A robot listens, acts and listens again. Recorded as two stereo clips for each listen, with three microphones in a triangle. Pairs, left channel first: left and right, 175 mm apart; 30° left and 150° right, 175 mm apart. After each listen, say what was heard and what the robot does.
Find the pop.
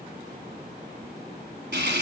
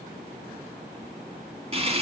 Keep listening.
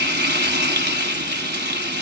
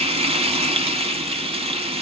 Keep listening.
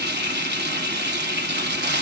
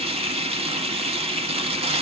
I can't make out a pop, only frying.